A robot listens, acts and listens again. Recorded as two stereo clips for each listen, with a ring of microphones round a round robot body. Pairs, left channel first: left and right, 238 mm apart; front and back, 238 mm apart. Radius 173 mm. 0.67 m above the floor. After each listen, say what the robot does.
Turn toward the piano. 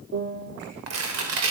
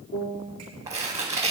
Turn 55° right.
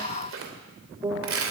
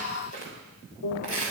Turn 20° right.
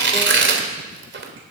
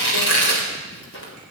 Keep listening.
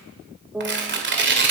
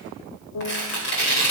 Found it: a piano, straight ahead, 1 to 2 m away.